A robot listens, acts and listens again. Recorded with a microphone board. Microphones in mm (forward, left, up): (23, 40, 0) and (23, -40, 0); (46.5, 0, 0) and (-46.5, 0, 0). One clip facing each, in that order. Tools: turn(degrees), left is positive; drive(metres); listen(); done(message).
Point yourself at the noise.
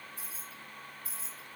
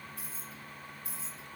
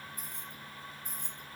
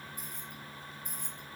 turn(degrees=-60)
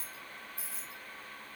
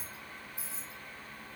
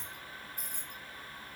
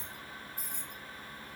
turn(degrees=-20)
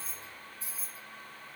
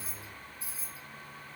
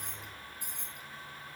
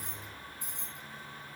turn(degrees=-15)
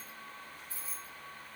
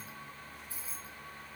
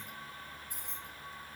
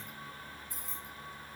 turn(degrees=-20)
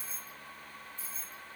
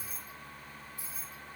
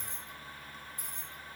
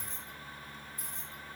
turn(degrees=-15)
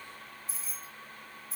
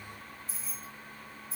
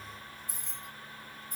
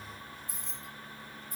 done("Facing the keys jangling, 1 to 2 m away.")